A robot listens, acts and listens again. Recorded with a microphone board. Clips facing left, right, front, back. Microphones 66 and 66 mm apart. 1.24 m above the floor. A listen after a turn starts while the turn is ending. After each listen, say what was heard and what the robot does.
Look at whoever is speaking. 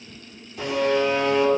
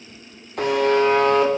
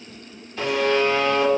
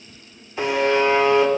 Keep listening.
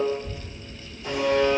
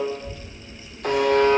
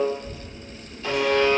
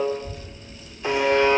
The child speaking: 160° left. Turn 160° left.
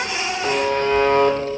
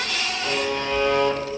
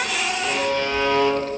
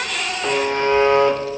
Keep listening.
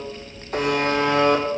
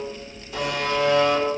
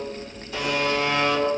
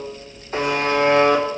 The child speaking is now 40° left. Turn 40° left.
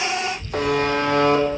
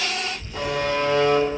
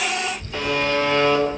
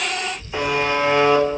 The child speaking is now 15° left. Turn 15° left.
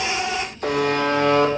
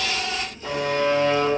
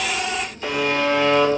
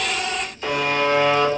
Keep listening.
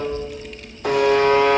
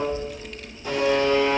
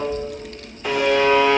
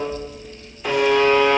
Found it: a child speaking, straight ahead, 2 to 4 m away.